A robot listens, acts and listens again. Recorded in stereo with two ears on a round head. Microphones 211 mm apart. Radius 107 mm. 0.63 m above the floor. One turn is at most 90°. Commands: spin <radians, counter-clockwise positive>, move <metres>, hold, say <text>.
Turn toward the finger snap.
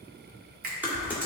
spin -0.70
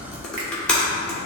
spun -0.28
hold
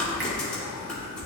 hold
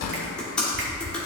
say I heard a finger snap, but can't make it out now. It was about 25° right or 125° right.